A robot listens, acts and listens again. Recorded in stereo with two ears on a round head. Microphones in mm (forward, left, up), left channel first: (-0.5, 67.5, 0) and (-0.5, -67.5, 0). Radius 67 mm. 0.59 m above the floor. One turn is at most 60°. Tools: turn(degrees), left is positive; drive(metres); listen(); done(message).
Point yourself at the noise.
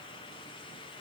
listen()
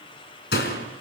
turn(degrees=60)
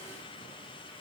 turn(degrees=30)
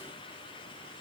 done("I heard a door slam from this way, but can't make it out now.")